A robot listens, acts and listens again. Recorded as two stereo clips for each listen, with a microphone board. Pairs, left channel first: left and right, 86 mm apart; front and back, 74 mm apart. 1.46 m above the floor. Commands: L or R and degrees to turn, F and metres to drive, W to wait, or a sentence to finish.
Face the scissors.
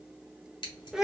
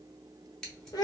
L80
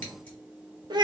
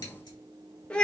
W
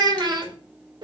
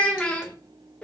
W
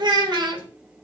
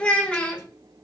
I heard scissors from this way, but can't make it out now.